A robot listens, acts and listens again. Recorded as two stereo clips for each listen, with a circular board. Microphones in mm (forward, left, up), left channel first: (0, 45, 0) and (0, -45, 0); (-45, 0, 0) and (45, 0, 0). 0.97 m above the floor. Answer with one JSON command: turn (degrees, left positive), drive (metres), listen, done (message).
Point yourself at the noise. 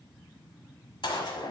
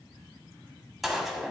{"turn": 90}
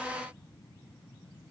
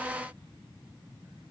{"done": "Facing where the gunshot came from. I can't hear it now."}